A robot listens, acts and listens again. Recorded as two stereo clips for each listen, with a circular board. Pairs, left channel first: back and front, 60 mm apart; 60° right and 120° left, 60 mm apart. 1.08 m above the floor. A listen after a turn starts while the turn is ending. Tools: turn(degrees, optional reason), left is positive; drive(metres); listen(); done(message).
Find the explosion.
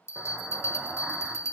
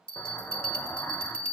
turn(degrees=-65, reason="The explosion: 65° right.")
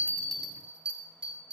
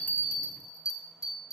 done("Facing where the explosion came from. I can't hear it now.")